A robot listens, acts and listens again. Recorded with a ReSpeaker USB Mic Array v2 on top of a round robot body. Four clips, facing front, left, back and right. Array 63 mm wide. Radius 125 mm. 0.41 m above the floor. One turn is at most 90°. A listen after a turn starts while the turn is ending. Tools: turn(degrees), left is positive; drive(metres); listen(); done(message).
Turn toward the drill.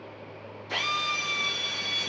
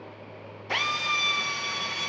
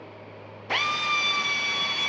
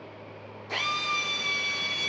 turn(degrees=90)
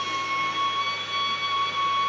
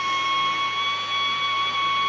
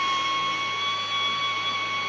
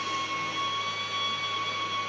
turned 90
turn(degrees=90)
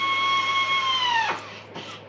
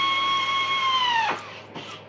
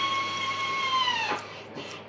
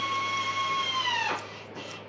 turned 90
turn(degrees=65)
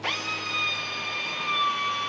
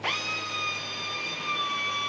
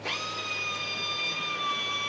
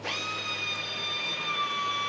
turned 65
done("Facing the drill, 2 to 4 m away.")